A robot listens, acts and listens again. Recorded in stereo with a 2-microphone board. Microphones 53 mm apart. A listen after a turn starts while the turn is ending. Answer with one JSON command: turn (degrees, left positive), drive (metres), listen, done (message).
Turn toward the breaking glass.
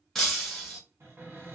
{"turn": 30}
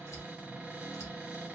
{"listen": true}
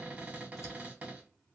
{"done": "I heard breaking glass, but can't make it out now. It was about 25° right or 145° left."}